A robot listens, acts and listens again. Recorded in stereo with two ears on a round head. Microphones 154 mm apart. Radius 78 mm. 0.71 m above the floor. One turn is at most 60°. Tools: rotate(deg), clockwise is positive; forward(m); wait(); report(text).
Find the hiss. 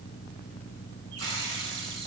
rotate(60)
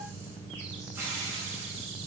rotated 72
rotate(15)
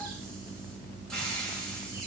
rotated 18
report("Facing the hiss.")